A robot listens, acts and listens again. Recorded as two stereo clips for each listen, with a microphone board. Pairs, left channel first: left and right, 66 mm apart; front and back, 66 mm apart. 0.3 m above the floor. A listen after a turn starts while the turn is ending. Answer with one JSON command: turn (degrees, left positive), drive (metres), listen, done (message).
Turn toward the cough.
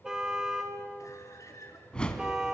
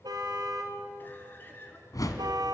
{"turn": 60}
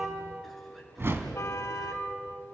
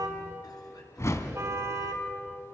{"listen": true}
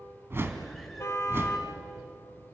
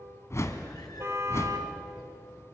{"listen": true}
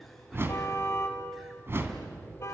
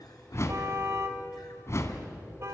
{"done": "I heard a cough from this way, but can't make it out now."}